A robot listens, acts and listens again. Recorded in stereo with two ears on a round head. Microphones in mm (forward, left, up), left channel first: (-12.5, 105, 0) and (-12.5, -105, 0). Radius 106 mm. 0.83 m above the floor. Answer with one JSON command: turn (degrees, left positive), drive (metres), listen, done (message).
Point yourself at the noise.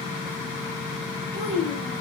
{"turn": -25}
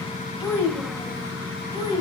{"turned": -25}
{"turn": -15}
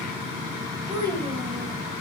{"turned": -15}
{"turn": -20}
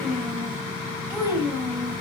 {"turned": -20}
{"turn": -30}
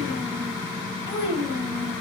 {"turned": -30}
{"turn": 20}
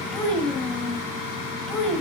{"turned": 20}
{"done": "Facing the child speaking."}